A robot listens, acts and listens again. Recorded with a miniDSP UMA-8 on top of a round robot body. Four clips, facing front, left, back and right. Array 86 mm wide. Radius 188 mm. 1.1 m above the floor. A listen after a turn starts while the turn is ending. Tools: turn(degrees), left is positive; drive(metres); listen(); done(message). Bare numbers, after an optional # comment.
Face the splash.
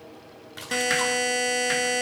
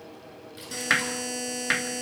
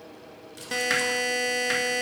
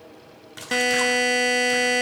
# The splash: 45° right.
turn(-45)
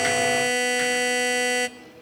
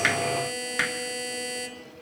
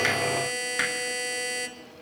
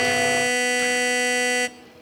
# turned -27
# Nothing new. It was at 20° right.
turn(-20)
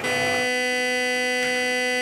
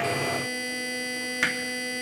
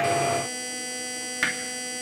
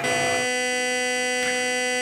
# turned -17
done("Facing where the splash came from. I can't hear it now.")